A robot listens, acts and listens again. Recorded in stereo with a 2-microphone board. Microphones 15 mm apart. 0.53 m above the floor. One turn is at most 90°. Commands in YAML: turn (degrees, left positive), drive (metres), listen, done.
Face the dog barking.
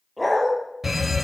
turn: 30
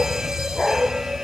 turn: 90
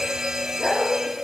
turn: 55
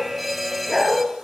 done: "Found it: a dog barking, straight ahead, 2 to 4 m away."